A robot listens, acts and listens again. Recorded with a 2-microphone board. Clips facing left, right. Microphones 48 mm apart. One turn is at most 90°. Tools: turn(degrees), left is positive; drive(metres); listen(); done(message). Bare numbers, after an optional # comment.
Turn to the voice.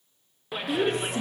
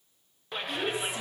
# The woman speaking: about 60° left or 120° left.
turn(60)
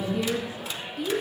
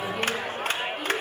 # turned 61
done("Found it: a woman speaking, straight ahead.")